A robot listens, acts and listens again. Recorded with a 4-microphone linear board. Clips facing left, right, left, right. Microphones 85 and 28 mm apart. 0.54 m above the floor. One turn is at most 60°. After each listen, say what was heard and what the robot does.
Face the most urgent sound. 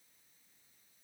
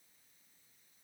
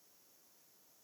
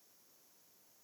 Keep listening.
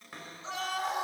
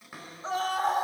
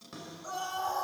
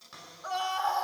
The scream: about 45° right or 135° right. Turn 45° right.
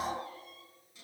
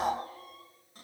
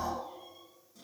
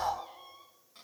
So it is at 85° right. Turn 60° right.
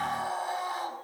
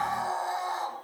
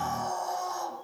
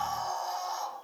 The scream is now 25° right. Turn 25° right.
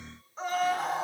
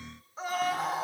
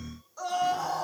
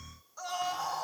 Found it: a scream, straight ahead.